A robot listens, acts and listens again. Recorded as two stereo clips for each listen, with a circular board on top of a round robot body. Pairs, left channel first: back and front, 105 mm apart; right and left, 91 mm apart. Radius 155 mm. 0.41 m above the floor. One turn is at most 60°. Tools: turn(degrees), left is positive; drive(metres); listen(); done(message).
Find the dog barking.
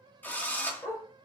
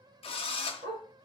turn(degrees=60)
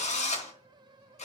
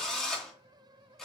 turn(degrees=55)
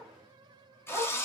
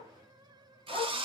turn(degrees=-60)
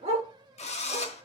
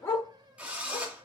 turn(degrees=-30)
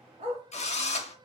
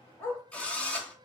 turn(degrees=-20)
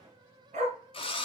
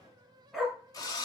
done("Found it: a dog barking, straight ahead, 1 to 2 m away.")